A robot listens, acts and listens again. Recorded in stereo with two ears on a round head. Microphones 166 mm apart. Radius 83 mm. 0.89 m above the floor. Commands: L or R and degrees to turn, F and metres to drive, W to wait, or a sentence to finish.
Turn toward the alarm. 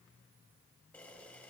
W
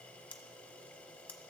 W
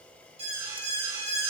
R90
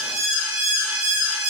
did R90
R10
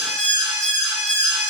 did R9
Found it: an alarm, straight ahead, 2 to 4 m away.